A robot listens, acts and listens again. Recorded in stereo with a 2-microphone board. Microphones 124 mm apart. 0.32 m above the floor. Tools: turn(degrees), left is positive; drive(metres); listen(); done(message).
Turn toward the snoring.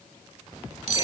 listen()
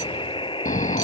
turn(degrees=90)
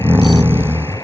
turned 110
turn(degrees=-15)
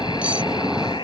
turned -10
done("Found it: snoring, straight ahead.")